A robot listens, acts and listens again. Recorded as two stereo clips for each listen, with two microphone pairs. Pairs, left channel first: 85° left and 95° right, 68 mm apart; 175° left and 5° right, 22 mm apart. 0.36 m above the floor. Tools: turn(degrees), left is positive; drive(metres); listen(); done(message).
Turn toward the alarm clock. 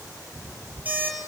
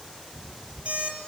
turn(degrees=-25)
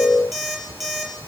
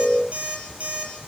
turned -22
done("Found it: an alarm clock, straight ahead, over 4 m away.")